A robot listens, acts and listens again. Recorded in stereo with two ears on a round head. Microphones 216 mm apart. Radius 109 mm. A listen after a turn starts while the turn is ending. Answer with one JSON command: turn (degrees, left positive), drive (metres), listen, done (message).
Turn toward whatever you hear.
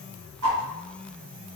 {"turn": -65}
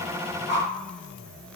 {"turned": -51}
{"turn": -30}
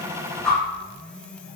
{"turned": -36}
{"done": "Found it: a whoosh, straight ahead."}